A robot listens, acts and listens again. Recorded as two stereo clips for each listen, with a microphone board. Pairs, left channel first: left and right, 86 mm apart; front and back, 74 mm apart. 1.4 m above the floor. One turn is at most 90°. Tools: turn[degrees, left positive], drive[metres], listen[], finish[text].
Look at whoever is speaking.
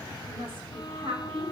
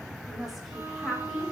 Thought: The woman speaking: 90° right.
Action: turn[-90]
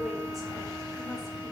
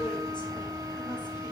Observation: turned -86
Action: listen[]
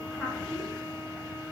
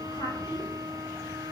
Action: finish[Found it: a woman speaking, straight ahead.]